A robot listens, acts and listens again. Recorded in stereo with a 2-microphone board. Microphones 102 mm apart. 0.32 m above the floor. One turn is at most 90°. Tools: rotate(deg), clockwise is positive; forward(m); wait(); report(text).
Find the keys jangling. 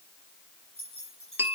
rotate(75)
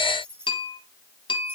rotate(25)
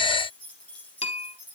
rotate(-15)
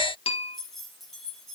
report("Found it: keys jangling, straight ahead.")